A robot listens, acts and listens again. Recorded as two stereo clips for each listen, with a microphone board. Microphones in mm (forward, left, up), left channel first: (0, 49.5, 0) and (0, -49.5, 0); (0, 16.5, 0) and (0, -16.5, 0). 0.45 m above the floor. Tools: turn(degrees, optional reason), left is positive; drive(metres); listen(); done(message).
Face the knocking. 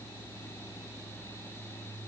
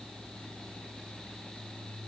listen()
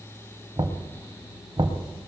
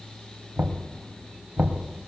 turn(degrees=-55, reason="The knocking: about 55° right or 125° right.")
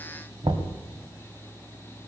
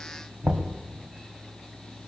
turn(degrees=-70, reason="So it is at 70° right.")
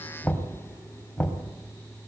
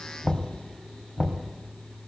turn(degrees=15, reason="The knocking is now 15° left.")
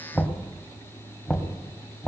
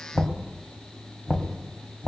done("Found it: knocking, straight ahead.")